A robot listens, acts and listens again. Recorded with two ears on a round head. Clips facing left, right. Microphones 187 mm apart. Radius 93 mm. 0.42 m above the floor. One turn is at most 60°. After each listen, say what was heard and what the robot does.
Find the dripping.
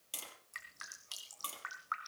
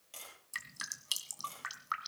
The dripping: about 50° right or 130° right. Turn 50° right.
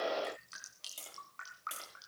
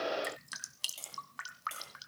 So it is at 80° right. Turn 60° right.
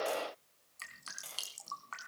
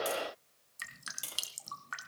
The dripping is now 20° right. Turn 20° right.
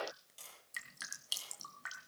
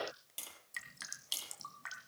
Facing the dripping, 1 to 2 m away.